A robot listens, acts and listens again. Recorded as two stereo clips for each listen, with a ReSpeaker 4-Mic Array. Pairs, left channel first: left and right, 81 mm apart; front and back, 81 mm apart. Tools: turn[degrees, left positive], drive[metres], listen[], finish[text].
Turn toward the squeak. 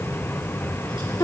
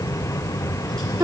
Action: listen[]
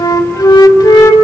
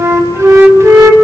Action: listen[]
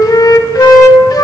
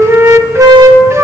Action: finish[I can't make out a squeak to turn to.]